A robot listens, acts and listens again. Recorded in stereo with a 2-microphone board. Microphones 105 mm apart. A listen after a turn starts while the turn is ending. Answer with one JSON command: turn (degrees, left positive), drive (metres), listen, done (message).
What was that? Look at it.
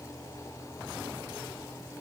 {"listen": true}
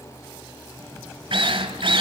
{"turn": -70}
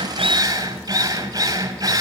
{"turn": -35}
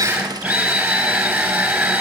{"turn": -10}
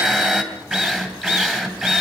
{"done": "Facing the drill, 2 to 4 m away."}